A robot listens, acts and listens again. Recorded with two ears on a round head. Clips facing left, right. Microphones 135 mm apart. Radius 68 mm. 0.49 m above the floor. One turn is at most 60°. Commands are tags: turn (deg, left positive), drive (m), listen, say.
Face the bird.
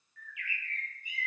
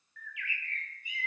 <turn deg="-55"/>
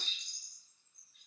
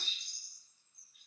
<say>Found it: a bird, straight ahead, 2 to 4 m away.</say>